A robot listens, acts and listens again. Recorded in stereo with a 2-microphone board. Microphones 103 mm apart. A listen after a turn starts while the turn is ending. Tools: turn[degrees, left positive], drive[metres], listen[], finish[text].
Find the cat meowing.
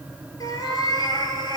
Thought: The cat meowing: about 50° left or 130° left.
Action: turn[50]
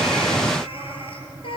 Thought: So it is at 65° left.
Action: turn[65]
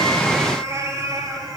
Thought: The cat meowing is now 40° right.
Action: turn[-40]
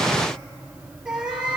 Thought: The cat meowing is now 10° right.
Action: turn[-10]
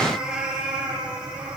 Thought: The cat meowing is now 10° right.
Action: turn[-10]
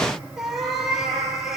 Action: finish[Found it: a cat meowing, straight ahead.]